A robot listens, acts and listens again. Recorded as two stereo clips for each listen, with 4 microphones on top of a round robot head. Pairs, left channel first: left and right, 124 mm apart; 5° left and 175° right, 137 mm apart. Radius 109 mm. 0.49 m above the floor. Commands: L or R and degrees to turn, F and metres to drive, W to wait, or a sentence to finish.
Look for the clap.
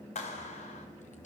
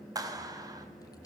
L125
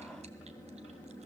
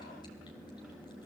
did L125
W
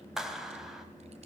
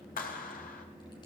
Found it: a clap, straight ahead.